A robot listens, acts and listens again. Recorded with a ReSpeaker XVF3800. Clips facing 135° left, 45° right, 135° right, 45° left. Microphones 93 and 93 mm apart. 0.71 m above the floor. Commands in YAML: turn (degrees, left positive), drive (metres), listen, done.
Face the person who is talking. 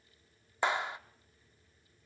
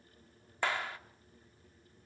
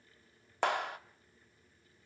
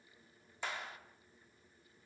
listen: true
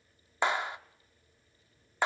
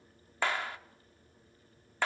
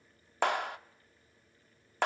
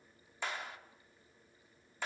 listen: true
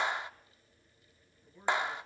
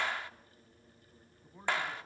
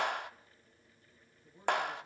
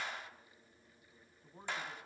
done: "Facing the man speaking, over 4 m away."